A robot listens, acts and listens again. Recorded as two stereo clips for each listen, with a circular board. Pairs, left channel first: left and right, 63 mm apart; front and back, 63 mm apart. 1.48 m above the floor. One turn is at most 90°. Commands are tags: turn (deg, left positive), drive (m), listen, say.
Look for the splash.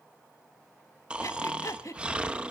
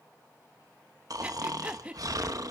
<listen/>
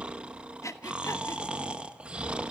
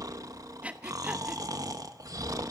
<listen/>
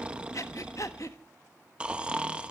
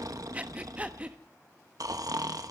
<say>I can't make out a splash, only breathing and snoring.</say>